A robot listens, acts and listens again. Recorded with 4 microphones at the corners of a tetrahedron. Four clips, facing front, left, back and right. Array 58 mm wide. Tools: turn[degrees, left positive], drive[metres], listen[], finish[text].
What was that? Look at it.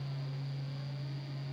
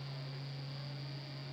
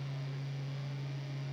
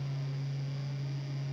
Action: listen[]
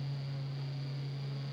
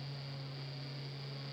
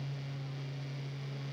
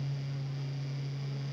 Action: listen[]
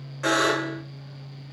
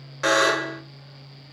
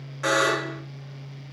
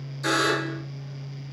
Thought: The buzzer: 90° left.
Action: turn[90]
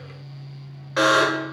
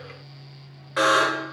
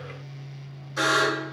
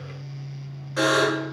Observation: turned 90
Thought: The buzzer is now 30° left.
Action: turn[30]
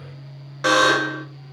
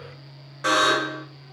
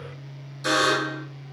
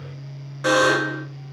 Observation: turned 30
Action: finish[Found it: a buzzer, straight ahead, under 1 m away.]